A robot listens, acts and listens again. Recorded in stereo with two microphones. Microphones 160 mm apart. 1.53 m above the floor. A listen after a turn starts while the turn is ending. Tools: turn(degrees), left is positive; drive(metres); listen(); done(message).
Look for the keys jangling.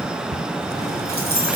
turn(degrees=-90)
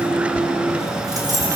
turn(degrees=-20)
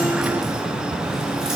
listen()
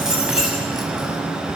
done("Found it: keys jangling, straight ahead.")